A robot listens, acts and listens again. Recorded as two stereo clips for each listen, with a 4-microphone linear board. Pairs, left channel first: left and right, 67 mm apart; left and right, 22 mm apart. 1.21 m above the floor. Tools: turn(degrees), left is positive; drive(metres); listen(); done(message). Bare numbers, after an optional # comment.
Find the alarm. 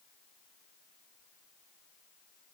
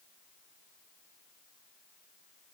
listen()
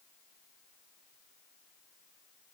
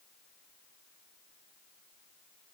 listen()
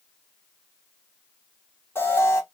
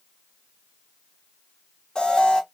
# The alarm: about 35° left or 145° left.
turn(35)
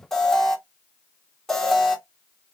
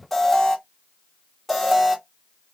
done("Facing the alarm.")